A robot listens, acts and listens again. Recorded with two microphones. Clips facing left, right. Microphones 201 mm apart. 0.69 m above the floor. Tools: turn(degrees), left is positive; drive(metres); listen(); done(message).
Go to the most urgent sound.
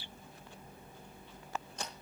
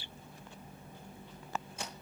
listen()
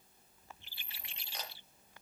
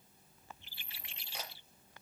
listen()
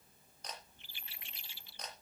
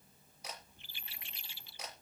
done("I can't make out anything urgent to turn to.")